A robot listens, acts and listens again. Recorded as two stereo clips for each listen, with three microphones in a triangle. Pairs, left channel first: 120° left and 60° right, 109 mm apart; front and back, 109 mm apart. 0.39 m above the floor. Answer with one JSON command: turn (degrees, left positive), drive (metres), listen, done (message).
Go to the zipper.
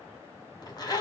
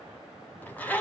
{"turn": 75}
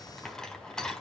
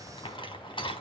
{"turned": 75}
{"turn": 35}
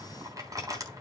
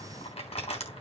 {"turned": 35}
{"drive": 1.0}
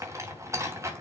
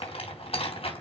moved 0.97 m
{"drive": 1.0}
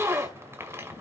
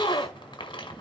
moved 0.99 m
{"drive": 1.0}
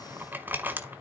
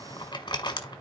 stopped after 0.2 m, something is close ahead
{"done": "I am next to the zipper."}